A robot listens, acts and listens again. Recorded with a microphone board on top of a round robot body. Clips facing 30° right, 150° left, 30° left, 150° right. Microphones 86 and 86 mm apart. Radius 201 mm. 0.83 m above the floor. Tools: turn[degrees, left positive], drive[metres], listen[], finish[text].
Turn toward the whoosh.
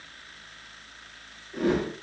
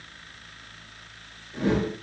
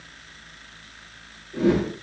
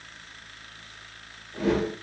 Thought: The whoosh: 15° left.
Action: turn[15]
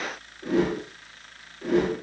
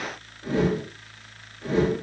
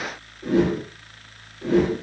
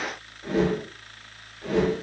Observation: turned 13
Action: finish[Facing the whoosh.]